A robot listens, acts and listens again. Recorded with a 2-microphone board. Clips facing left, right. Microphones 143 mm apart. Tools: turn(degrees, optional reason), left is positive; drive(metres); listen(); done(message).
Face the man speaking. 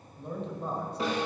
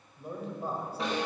turn(degrees=-30)
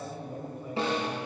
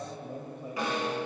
turn(degrees=-140, reason="So it is at 140° right.")
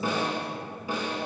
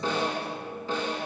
listen()
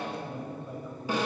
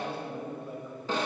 done("Found it: a man speaking, straight ahead.")